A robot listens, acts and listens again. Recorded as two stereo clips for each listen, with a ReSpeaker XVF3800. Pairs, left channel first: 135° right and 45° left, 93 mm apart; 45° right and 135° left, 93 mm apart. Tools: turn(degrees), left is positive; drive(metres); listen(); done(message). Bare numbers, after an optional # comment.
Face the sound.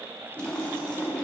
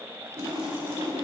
# The splash: 145° left.
turn(145)
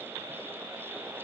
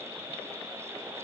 done("I heard a splash from this way, but can't make it out now.")